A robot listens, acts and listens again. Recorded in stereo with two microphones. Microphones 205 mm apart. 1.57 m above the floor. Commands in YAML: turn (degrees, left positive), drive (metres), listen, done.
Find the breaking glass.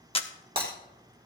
turn: -30
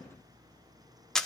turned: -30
listen: true
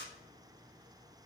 done: "I heard breaking glass, but can't make it out now. It was about straight ahead or 120° right."